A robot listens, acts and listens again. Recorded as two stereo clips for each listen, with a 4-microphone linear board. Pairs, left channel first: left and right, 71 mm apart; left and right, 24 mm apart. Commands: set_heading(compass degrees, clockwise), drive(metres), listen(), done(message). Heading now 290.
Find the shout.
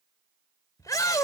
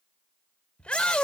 set_heading(235)
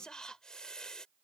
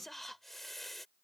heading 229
listen()
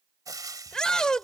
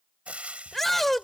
set_heading(219)
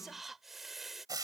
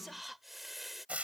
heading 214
listen()
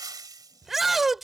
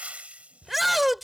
done("Found it: a shout, straight ahead.")